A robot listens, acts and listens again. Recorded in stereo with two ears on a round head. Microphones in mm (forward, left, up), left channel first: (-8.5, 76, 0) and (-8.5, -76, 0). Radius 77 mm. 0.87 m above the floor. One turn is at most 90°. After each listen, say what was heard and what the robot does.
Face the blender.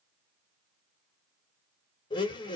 The blender: about 30° left or 150° left. Turn 30° left.
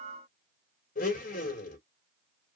So it is at 115° left. Turn 90° left.
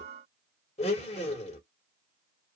The blender is now 40° left. Turn 40° left.
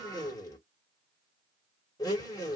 The blender is now 25° left. Turn 25° left.
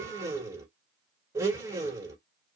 The blender is now 20° right. Turn 20° right.
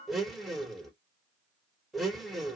Facing the blender.